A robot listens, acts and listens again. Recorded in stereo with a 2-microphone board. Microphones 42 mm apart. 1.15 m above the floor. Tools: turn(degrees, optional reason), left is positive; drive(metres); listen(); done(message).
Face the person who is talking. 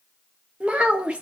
turn(degrees=-25, reason="The child speaking: about 25° right or 155° right.")
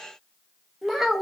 done("Facing the child speaking.")